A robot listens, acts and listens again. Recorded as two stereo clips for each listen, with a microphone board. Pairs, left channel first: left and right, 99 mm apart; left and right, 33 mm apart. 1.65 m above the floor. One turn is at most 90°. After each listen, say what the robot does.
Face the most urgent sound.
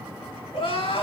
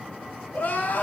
Turn 70° left.
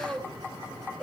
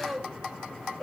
Found it: crying, straight ahead, 2 to 4 m away.